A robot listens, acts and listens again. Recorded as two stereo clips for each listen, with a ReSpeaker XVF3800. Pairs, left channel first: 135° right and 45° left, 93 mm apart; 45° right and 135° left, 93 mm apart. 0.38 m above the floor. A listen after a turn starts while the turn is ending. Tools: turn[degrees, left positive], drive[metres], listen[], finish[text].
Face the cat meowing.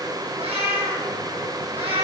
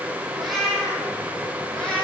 Thought: The cat meowing: 35° left.
Action: turn[35]
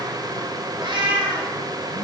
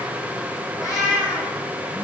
Action: finish[Facing the cat meowing.]